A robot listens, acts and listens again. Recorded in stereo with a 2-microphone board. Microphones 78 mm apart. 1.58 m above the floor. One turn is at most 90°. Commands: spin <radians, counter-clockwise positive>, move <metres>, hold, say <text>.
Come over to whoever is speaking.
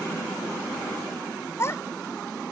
spin 0.61
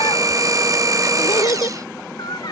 spin 1.57
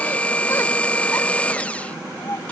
spin 0.70
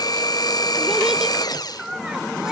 spin -0.17
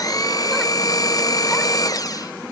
hold
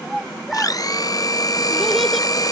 move 1.0
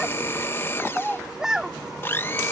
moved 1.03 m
spin -0.17
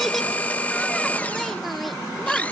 move 1.0
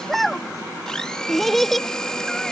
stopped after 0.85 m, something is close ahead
say Arrived at the child speaking, straight ahead.